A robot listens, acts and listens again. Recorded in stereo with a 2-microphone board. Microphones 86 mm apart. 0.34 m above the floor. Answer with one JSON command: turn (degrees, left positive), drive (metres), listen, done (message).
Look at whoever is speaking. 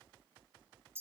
{"listen": true}
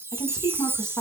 {"turn": 45}
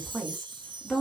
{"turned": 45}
{"done": "Facing the woman speaking, 2 to 4 m away."}